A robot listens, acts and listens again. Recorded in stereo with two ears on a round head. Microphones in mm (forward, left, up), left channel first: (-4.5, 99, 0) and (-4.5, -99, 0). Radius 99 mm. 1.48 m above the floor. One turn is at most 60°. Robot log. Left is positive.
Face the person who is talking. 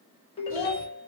note: The child speaking: about 40° left or 140° left.
cmd yaw +40
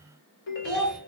end: Found it: a child speaking, straight ahead, 2 to 4 m away.